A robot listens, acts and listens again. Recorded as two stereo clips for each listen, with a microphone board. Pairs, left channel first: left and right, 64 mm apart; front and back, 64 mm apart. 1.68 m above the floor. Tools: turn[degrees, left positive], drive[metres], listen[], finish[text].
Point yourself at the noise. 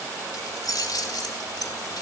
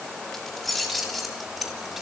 Thought: The keys jangling: 95° left.
Action: turn[95]
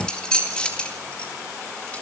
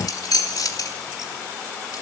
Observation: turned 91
Thought: The keys jangling is now 15° left.
Action: turn[15]
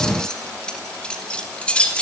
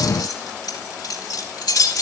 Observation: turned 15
Thought: The keys jangling is now 20° left.
Action: turn[20]
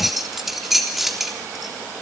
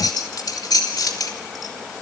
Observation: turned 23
Action: finish[Facing the keys jangling, 2 to 4 m away.]